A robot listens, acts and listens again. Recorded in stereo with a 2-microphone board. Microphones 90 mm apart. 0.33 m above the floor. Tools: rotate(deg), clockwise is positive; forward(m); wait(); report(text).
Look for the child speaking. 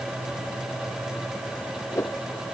wait()
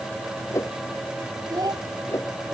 rotate(45)
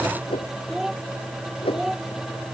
report("Found it: a child speaking, straight ahead.")